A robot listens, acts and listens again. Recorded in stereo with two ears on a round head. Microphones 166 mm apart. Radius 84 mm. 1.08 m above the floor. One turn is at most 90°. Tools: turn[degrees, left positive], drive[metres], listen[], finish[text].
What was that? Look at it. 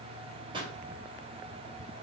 Thought: The pop: about 25° right or 155° right.
Action: turn[-25]
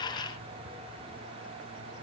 Action: listen[]
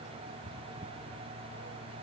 Action: finish[I heard a pop, but can't make it out now. It was about straight ahead or 130° right.]